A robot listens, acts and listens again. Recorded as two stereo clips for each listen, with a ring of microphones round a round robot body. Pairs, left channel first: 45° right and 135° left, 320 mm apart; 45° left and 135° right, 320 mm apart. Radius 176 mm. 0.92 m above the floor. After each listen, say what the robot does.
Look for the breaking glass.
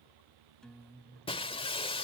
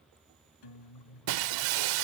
Turn 120° right.
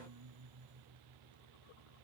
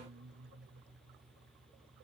Facing where the breaking glass came from. I can't hear it now.